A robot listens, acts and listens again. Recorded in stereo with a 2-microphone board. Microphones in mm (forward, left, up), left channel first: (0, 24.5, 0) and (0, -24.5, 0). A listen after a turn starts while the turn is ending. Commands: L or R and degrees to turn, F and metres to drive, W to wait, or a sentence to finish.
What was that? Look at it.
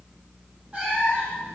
R25
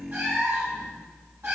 R140
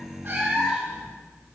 R10
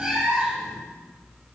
Found it: a cat meowing, straight ahead.